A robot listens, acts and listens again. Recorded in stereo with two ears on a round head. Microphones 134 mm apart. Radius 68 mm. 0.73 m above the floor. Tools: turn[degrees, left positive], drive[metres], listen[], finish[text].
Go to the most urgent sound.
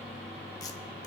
Action: listen[]
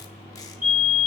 Action: turn[-30]
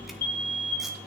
Thought: So it is at 15° left.
Action: turn[15]
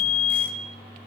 Action: drive[1.0]
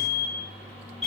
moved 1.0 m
Action: drive[1.0]
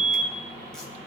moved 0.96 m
Action: drive[1.0]
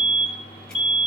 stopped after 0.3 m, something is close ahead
Thought: The fire alarm is now 10° right.
Action: turn[-10]
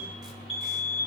Action: finish[Arrived at the fire alarm, straight ahead.]